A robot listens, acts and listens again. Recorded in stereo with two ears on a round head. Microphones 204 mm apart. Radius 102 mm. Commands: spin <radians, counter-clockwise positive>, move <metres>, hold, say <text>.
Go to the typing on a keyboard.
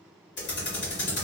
spin 0.87
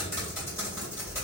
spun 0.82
spin 0.26
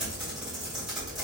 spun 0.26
move 1.0
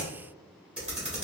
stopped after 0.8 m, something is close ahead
say I am next to the typing on a keyboard.